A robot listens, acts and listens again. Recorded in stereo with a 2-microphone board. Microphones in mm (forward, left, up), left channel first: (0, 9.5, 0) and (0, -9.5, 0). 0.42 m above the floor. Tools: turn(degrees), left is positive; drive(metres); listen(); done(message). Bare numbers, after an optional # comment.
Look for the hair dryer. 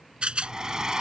# The hair dryer: about 40° right or 140° right.
turn(-40)
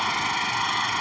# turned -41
done("Facing the hair dryer.")